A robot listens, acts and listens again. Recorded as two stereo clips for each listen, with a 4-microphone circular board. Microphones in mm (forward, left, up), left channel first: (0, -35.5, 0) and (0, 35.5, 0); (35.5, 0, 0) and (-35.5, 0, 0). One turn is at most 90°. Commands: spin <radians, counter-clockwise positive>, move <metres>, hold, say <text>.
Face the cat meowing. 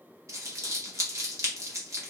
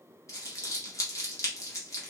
hold
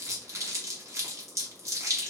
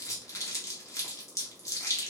hold
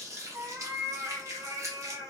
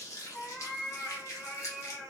spin 1.13
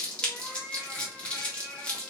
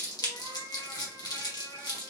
spin 0.17
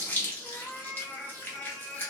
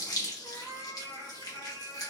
say Facing the cat meowing, 2 to 4 m away.